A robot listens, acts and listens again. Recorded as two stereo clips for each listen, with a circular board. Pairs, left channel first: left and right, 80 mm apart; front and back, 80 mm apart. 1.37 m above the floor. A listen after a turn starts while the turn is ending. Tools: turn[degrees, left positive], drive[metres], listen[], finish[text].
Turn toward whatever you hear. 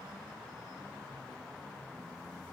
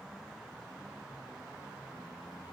Action: listen[]
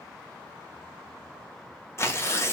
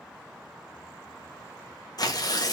Thought: The tearing paper: 35° left.
Action: turn[35]
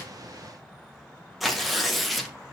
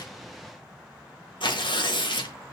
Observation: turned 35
Action: finish[Found it: tearing paper, straight ahead.]